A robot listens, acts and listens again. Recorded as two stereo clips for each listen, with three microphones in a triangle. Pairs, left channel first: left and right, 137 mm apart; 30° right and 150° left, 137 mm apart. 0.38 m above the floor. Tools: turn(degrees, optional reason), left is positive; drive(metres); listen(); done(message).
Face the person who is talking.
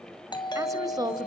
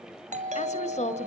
turn(degrees=-35, reason="The woman speaking: 35° right.")
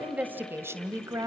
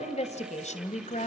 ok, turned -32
turn(degrees=-30, reason="The woman speaking is now 30° right.")
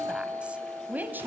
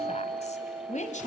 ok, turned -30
turn(degrees=-15, reason="The woman speaking is now 15° right.")
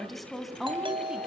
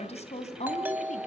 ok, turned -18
done("Found it: a woman speaking, straight ahead.")